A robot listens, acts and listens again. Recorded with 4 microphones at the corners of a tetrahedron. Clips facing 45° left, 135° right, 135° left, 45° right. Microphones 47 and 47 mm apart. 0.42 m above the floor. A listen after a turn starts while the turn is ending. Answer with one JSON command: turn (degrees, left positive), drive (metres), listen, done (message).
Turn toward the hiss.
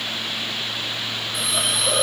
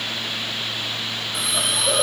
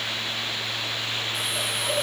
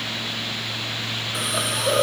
{"turn": -45}
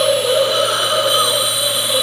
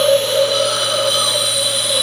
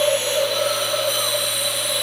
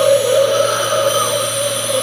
{"turn": -20}
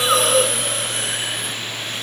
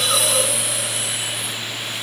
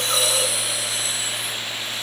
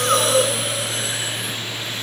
{"done": "Facing the hiss, under 1 m away."}